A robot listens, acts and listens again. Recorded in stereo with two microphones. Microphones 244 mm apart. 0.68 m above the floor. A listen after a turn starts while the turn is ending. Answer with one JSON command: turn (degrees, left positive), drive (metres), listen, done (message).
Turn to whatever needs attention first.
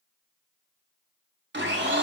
{"listen": true}
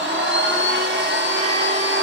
{"listen": true}
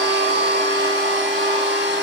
{"done": "I can't make out anything urgent, only a blender."}